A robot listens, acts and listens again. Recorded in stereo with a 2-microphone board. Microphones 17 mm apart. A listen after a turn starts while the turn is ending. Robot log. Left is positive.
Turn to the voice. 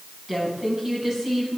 note: The woman speaking: about 20° right or 160° right.
cmd yaw -20
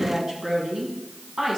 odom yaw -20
note: So it is at 140° right.
cmd yaw -140
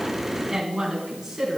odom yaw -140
note: The woman speaking is now 15° right.
cmd yaw -15
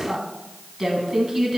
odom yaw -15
end: Facing the woman speaking, 2 to 4 m away.